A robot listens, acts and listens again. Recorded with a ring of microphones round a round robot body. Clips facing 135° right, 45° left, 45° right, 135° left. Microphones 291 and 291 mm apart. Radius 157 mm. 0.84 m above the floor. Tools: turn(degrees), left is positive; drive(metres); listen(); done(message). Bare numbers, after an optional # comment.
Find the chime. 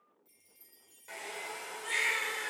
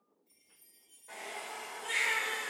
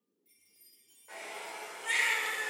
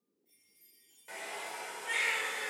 # The chime: 115° right.
turn(-115)
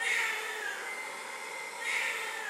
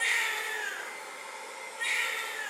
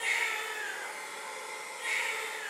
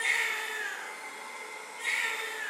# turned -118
listen()
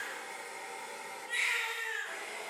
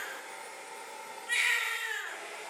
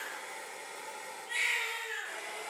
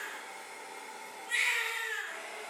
listen()
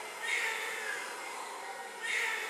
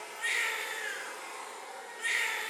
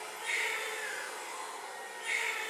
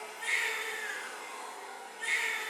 done("Facing where the chime came from. I can't hear it now.")